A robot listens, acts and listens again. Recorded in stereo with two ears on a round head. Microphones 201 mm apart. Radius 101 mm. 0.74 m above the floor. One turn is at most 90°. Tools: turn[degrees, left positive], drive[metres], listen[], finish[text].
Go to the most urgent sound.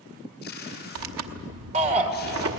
Thought: The shout: about 30° right or 150° right.
Action: turn[-30]
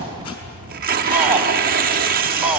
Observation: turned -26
Action: drive[1.0]
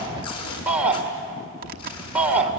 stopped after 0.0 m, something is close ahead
Action: finish[Blocked. The shout is further on, straight ahead.]